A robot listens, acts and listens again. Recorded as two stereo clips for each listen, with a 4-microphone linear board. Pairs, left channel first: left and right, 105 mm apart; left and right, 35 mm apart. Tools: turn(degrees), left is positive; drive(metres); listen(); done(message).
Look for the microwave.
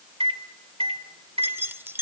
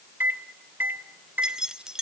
turn(degrees=-70)
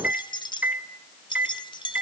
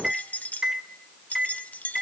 turn(degrees=-15)
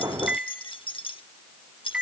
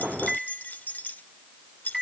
turn(degrees=-10)
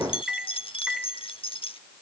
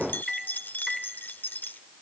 done("Facing the microwave.")